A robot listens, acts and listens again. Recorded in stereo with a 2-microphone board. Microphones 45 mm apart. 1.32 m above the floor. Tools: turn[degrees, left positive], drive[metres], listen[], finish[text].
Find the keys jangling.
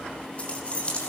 Thought: The keys jangling: about 25° left or 155° left.
Action: turn[25]
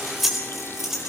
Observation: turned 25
Thought: So it is at 10° right.
Action: turn[-10]
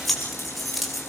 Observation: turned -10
Action: finish[Facing the keys jangling, over 4 m away.]